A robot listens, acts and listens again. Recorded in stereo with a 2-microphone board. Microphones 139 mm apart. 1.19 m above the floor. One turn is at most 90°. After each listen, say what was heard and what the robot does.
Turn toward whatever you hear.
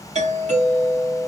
The doorbell: about 60° right or 120° right. Turn 60° right.
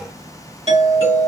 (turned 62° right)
So it is at 55° right. Turn 55° right.
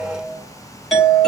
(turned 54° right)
Found it: a doorbell, straight ahead.